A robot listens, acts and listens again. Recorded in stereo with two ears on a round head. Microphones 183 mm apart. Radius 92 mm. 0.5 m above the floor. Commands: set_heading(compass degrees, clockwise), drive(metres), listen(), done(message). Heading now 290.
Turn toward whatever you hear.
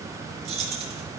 set_heading(325)
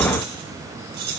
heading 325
set_heading(90)
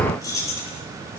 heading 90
set_heading(75)
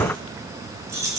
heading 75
set_heading(90)
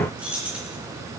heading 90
done("Facing the keys jangling, 2 to 4 m away.")